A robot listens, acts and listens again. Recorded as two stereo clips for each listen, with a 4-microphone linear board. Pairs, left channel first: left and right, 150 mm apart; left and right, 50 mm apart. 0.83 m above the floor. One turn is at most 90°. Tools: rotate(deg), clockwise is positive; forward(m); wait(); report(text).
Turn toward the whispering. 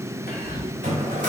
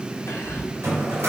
rotate(-70)
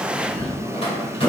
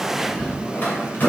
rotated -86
rotate(-10)
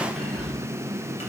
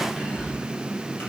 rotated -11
report("Facing the whispering, 2 to 4 m away.")